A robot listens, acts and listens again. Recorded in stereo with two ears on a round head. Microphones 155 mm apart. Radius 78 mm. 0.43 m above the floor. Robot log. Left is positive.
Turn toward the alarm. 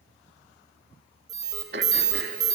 note: The alarm: about 25° right or 155° right.
cmd yaw -25
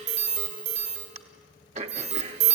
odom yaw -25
note: So it is at 130° right.
cmd yaw -130
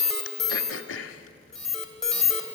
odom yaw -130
end: Facing the alarm, 2 to 4 m away.